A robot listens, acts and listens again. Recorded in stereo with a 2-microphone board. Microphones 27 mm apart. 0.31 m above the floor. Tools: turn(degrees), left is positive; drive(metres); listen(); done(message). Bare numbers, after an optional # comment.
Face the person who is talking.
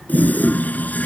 listen()
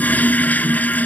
listen()
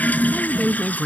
# The woman speaking: about 15° left or 165° left.
turn(15)
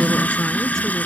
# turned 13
listen()
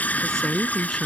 turn(30)
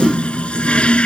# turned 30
listen()
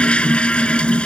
listen()
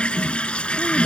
done("I heard a woman speaking, but can't make it out now. It was about 15° right or 135° left.")